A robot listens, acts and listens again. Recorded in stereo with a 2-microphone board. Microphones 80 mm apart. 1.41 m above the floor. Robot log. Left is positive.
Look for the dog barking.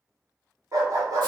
note: The dog barking: about 45° right or 135° right.
cmd yaw -45
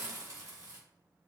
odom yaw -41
cmd idle
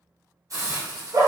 note: The dog barking: about 50° right or 130° right.
cmd yaw -50
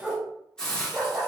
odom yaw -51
note: So it is at 25° right.
cmd yaw -25
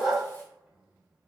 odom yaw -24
end: Found it: a dog barking, straight ahead, 1 to 2 m away.